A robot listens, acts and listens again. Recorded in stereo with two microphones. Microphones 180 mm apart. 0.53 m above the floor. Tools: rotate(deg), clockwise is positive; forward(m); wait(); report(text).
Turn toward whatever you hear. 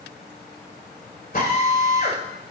rotate(-60)
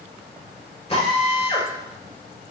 rotate(-40)
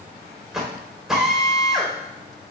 report("Found it: a drill, straight ahead, 2 to 4 m away.")